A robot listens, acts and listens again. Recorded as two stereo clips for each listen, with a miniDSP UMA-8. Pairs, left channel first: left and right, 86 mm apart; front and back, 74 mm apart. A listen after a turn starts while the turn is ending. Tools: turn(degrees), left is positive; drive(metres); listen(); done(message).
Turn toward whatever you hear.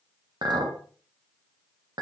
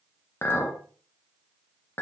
turn(degrees=-60)
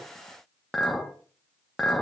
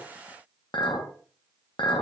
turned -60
done("Facing the clink, 1 to 2 m away.")